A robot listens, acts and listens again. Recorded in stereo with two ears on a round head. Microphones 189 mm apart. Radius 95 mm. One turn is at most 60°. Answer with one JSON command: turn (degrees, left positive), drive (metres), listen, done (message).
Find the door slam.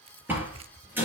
{"turn": -30}
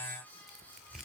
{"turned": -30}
{"listen": true}
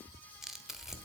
{"done": "I heard a door slam, but can't make it out now. It was about 20° left or 140° right."}